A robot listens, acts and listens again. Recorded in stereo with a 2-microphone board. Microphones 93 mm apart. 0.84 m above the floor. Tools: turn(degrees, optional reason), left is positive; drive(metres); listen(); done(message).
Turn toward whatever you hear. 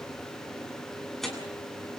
turn(degrees=30)
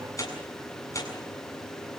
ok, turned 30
turn(degrees=145, reason="So it is at 145° left.")
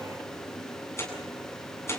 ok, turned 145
turn(degrees=30, reason="The tearing paper is now 30° left.")
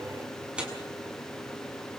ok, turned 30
turn(degrees=-10, reason="The tearing paper is now 10° right.")
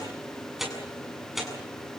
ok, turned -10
done("Facing the tearing paper.")